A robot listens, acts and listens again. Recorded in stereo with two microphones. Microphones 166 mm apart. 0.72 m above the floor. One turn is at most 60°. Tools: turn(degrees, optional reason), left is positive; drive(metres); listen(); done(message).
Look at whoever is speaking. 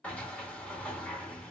listen()
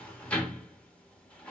listen()
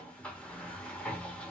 done("I can't make out anyone speaking, only a sliding door.")